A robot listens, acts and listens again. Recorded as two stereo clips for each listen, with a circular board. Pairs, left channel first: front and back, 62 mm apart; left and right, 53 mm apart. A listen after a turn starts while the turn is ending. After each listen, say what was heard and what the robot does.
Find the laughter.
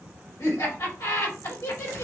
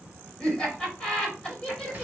The laughter: 20° left. Turn 20° left.
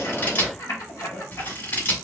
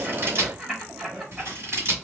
Facing the laughter.